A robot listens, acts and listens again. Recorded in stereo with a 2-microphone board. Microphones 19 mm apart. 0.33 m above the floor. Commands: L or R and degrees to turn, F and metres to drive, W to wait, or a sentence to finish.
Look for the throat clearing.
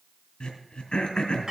L65
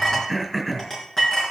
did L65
Facing the throat clearing.